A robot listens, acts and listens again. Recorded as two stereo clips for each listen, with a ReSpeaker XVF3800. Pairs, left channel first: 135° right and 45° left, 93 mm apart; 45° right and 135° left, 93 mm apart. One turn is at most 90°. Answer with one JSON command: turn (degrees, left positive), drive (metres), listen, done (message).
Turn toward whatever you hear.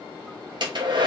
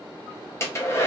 {"turn": 15}
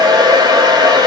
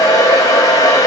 {"done": "Found it: a hair dryer, straight ahead, under 1 m away."}